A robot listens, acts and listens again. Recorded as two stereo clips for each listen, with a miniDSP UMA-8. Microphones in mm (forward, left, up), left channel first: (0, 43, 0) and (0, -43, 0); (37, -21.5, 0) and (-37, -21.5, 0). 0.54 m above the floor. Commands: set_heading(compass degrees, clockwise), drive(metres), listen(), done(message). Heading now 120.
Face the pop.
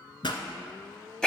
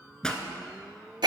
set_heading(40)
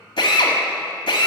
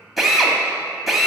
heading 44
done("I heard a pop from this way, but can't make it out now.")